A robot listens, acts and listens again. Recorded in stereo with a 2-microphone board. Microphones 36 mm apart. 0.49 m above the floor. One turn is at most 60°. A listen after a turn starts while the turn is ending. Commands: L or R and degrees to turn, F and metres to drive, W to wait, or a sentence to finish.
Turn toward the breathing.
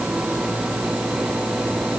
W
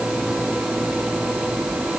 W
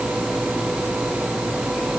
I can't make out breathing to turn to.